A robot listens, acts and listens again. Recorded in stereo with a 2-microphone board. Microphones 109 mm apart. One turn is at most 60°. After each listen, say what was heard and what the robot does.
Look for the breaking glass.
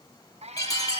The breaking glass: about 30° left or 150° left. Turn 30° left.
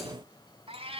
Keep listening.
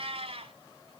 I heard breaking glass, but can't make it out now. It was about straight ahead or 120° left.